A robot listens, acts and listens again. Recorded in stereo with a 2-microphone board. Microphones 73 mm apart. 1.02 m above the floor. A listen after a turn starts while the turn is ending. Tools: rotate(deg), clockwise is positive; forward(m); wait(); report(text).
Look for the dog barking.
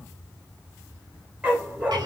rotate(20)
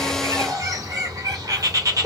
wait()
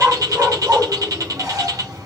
rotate(30)
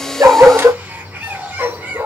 rotate(35)
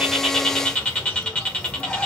wait()
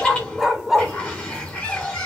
report("Found it: a dog barking, straight ahead, 1 to 2 m away.")